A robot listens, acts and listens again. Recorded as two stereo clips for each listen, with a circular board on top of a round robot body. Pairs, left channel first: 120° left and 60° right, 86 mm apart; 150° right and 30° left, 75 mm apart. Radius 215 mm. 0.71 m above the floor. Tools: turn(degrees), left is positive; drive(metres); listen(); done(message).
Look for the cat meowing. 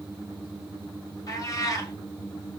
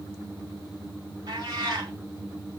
turn(degrees=70)
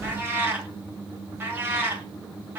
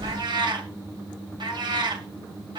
done("Facing the cat meowing.")